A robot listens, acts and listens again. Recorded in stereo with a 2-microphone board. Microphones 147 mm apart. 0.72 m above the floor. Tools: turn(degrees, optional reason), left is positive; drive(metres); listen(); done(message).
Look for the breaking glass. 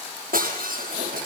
turn(degrees=-90)
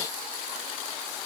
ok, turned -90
done("I heard breaking glass from this way, but can't make it out now.")